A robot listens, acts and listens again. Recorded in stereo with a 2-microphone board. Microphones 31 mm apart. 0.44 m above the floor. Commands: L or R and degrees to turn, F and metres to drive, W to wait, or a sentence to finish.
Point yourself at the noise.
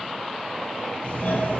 L65
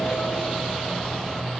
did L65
L20
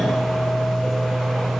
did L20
Found it: a doorbell, straight ahead, 2 to 4 m away.